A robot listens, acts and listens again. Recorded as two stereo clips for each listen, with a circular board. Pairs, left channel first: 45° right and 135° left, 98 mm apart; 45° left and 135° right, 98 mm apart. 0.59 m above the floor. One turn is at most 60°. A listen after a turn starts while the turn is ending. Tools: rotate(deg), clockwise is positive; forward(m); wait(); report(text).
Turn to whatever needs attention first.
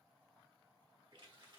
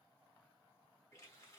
wait()
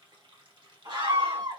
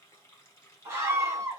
rotate(-60)
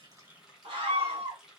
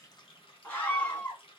rotate(-60)
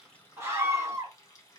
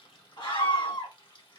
rotate(-60)
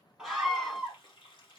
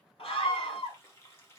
rotate(-45)
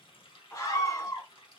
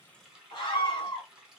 report("Facing the scream, 1 to 2 m away.")